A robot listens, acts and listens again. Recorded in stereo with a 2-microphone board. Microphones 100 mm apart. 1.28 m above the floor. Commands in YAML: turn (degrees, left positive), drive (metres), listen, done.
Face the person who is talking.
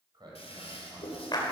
turn: -45
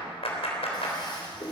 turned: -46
listen: true
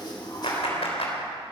listen: true
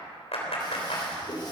done: "I heard a man speaking, but can't make it out now. It was about straight ahead or 90° right."